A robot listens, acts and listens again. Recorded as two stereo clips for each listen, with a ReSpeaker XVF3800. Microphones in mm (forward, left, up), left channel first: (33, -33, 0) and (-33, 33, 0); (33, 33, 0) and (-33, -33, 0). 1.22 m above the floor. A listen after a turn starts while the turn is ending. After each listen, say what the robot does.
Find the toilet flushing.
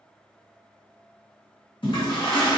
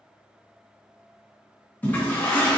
Turn 25° right.
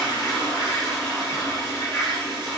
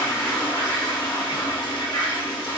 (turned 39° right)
Turn 15° left.
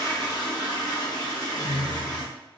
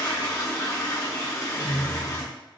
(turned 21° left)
Found it: a toilet flushing, straight ahead, under 1 m away.